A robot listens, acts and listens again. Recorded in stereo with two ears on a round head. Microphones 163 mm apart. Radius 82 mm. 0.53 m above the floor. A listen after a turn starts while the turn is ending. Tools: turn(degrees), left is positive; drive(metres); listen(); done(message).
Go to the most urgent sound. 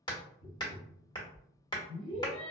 turn(degrees=55)
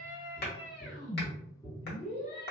turn(degrees=50)
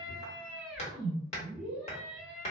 drive(metres=1.0)
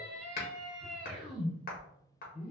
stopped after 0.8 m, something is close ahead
done("I am next to the scream.")